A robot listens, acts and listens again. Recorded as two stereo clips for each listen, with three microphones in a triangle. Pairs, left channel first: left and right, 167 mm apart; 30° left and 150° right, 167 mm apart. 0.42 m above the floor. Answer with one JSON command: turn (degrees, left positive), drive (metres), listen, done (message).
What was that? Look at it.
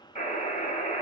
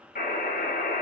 {"turn": 50}
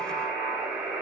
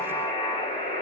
{"done": "Found it: a buzzer, straight ahead."}